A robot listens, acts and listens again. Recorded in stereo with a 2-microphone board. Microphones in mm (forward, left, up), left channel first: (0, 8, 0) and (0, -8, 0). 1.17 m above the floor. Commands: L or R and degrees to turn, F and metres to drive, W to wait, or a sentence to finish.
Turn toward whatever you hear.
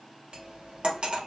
R90
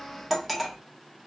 Found it: cutlery clinking, straight ahead.